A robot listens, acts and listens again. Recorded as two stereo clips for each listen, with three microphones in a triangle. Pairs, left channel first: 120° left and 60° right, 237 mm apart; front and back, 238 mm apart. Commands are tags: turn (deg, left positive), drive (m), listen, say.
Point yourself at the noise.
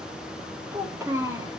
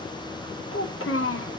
<turn deg="15"/>
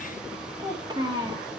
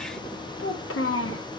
<turn deg="10"/>
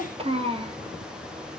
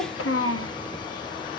<say>Found it: a child speaking, straight ahead.</say>